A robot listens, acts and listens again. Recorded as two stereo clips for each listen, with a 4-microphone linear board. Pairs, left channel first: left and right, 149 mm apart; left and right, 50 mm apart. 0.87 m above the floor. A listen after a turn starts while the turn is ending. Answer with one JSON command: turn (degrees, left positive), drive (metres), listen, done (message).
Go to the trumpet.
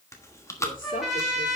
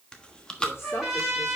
{"turn": -30}
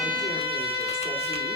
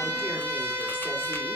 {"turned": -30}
{"turn": -145}
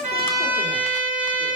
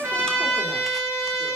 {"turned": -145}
{"turn": -10}
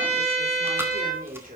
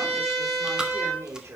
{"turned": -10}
{"drive": 1.0}
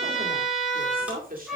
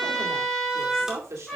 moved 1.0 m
{"drive": 1.0}
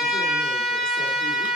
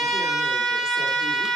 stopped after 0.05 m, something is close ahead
{"done": "Something is in my way. I am facing the trumpet but have not reached it."}